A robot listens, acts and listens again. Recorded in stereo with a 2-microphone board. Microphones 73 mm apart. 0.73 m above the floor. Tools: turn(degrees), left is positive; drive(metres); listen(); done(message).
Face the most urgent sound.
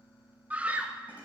turn(degrees=-20)
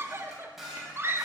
turn(degrees=-140)
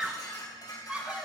turn(degrees=-20)
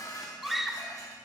done("Facing the scream, 1 to 2 m away.")